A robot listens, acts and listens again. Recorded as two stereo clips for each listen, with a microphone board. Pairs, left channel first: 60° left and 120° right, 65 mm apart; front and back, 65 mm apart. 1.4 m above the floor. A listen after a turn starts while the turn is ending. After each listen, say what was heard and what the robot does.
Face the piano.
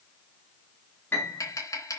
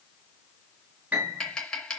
The piano: 115° left. Turn 115° left.
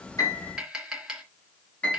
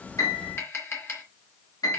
Facing the piano, over 4 m away.